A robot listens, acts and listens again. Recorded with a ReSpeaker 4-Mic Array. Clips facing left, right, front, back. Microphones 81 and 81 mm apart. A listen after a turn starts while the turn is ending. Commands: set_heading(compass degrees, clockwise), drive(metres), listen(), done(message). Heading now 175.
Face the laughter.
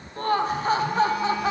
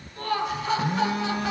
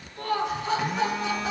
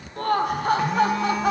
set_heading(35)
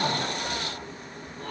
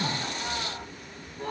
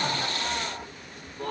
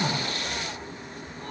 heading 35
set_heading(45)
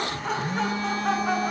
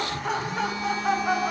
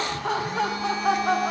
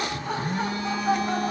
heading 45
done("Found it: laughter, straight ahead.")